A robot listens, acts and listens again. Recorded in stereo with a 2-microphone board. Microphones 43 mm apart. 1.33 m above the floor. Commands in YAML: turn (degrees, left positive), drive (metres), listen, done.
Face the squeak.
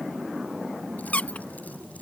turn: 30
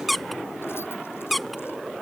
done: "Facing the squeak."